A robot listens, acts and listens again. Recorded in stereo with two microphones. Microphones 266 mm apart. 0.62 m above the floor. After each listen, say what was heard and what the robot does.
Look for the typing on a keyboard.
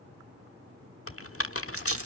The typing on a keyboard: about 55° left or 125° left. Turn 55° left.
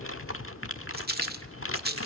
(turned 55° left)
So it is at 60° left. Turn 60° left.
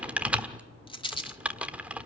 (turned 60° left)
Facing the typing on a keyboard.